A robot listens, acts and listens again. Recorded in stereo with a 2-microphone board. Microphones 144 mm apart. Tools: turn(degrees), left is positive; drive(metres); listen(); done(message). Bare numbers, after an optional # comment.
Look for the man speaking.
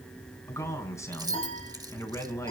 # The man speaking: about 20° left or 160° left.
turn(20)
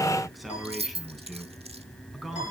done("Found it: a man speaking, straight ahead.")